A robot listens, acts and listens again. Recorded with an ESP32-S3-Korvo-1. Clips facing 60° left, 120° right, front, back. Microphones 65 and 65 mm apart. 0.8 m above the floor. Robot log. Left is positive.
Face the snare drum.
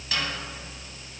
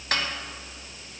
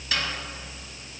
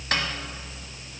note: The snare drum: 150° right.
cmd yaw -150
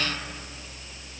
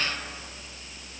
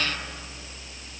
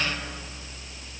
note: The snare drum is now 10° left.
cmd yaw +10
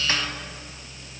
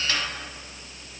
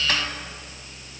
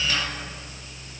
cmd idle
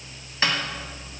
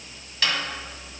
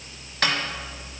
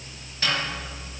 end: Found it: a snare drum, straight ahead, 1 to 2 m away.